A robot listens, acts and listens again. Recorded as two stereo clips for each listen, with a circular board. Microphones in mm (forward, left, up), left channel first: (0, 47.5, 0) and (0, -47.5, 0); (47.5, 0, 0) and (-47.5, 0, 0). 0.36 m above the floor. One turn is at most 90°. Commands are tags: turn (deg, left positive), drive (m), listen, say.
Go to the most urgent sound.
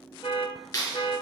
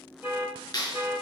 <turn deg="90"/>
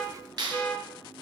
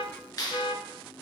<turn deg="15"/>
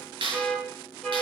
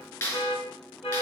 <drive m="1.0"/>
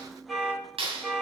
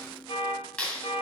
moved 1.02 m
<drive m="1.0"/>
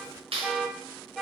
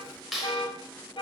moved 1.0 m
<drive m="1.0"/>
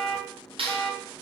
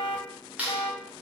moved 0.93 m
<drive m="1.0"/>
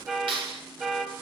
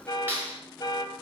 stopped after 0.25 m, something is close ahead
<turn deg="-10"/>
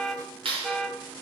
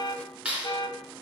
<say>Arrived at the alarm, straight ahead.</say>